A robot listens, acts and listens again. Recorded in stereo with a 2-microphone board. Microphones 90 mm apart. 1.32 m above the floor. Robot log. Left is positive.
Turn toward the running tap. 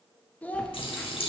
cmd yaw +90
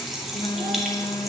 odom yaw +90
end: Facing the running tap.